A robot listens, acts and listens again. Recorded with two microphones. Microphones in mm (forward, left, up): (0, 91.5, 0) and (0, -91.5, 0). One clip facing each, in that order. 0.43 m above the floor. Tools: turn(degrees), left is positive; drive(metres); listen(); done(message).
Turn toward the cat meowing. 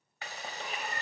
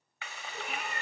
turn(degrees=-90)
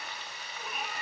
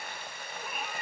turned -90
done("Found it: a cat meowing, straight ahead.")